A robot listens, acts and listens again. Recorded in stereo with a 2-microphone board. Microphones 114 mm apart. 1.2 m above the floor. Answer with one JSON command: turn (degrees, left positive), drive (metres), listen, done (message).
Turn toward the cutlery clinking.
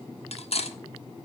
{"turn": 65}
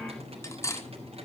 {"turn": 30}
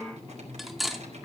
{"done": "Found it: cutlery clinking, straight ahead."}